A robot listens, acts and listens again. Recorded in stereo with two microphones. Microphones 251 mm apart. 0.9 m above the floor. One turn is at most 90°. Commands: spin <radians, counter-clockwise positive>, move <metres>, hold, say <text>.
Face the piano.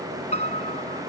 spin 0.44
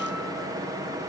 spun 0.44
hold
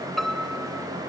say Facing the piano.